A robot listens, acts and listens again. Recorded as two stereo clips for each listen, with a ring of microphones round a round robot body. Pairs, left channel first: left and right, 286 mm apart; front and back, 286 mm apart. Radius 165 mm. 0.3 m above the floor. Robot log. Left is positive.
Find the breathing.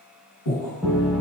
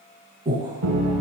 note: The breathing: 110° left.
cmd yaw +110
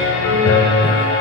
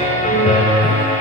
cmd idle
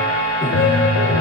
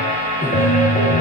note: The breathing is now 10° right.
cmd yaw -10
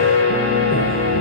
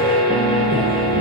cmd idle
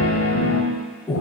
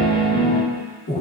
end: Found it: breathing, straight ahead.